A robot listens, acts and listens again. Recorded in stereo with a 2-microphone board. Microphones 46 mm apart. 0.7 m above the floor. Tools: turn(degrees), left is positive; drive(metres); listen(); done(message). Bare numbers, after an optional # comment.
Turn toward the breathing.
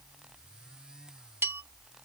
listen()
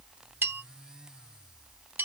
listen()
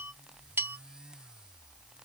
done("I can't make out breathing to turn to.")